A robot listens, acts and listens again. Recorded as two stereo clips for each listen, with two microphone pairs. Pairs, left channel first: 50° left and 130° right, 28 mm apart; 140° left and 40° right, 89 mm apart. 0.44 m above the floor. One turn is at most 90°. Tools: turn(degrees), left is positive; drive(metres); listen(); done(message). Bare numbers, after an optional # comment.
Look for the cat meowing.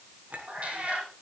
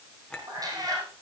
# The cat meowing: 90° right.
turn(-90)
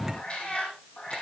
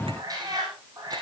done("Found it: a cat meowing, straight ahead.")